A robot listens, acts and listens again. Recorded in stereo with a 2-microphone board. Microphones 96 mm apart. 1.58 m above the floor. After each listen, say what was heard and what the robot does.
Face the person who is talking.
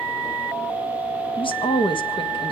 The woman speaking: about 60° left or 120° left. Turn 60° left.
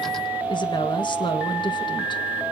So it is at 55° left. Turn 55° left.
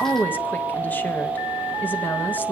The woman speaking is now 20° left. Turn 20° left.
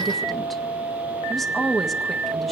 Facing the woman speaking, 1 to 2 m away.